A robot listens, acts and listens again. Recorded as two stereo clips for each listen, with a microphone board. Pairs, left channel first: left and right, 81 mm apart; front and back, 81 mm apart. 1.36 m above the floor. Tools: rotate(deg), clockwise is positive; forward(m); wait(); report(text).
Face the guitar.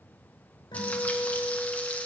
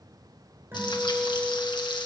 rotate(-115)
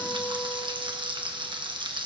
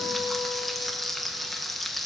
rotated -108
rotate(-10)
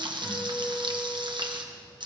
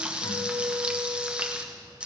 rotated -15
report("Facing the guitar, over 4 m away.")